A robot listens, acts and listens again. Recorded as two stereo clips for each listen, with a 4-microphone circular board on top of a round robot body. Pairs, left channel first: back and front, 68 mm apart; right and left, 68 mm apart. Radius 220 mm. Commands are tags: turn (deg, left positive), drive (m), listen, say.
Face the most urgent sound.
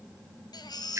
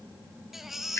<turn deg="175"/>
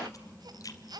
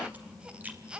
<turn deg="15"/>
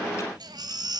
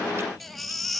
<say>Found it: a baby crying, straight ahead.</say>